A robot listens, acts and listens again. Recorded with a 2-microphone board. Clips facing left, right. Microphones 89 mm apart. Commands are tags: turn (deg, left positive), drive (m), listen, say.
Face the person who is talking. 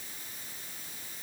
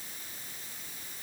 <listen/>
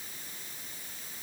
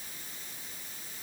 <listen/>
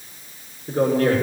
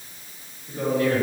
<turn deg="60"/>
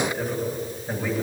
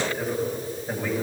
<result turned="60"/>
<say>Found it: a man speaking, straight ahead.</say>